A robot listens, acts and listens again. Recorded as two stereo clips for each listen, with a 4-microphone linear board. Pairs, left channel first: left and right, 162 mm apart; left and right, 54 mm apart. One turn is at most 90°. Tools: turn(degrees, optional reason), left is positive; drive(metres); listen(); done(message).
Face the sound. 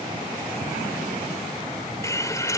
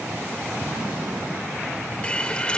turn(degrees=20, reason="The hiss: about 20° left or 160° left.")
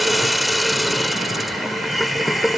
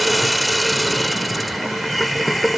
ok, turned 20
done("Facing the hiss.")